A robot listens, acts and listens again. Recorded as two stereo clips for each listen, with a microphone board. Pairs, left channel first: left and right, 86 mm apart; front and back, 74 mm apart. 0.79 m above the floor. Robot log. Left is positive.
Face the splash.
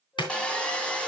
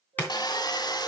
note: The splash: 65° left.
cmd yaw +65
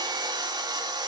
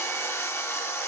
end: I heard a splash from this way, but can't make it out now.